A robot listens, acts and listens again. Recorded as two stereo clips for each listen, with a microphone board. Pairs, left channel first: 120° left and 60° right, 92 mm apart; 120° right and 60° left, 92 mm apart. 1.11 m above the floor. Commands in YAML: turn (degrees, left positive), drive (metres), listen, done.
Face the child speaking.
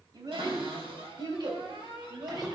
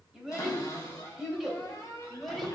turn: -30
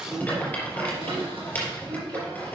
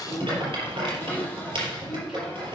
listen: true
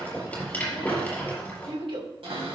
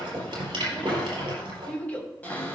turn: -45
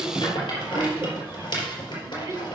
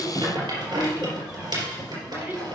done: "Facing the child speaking, 2 to 4 m away."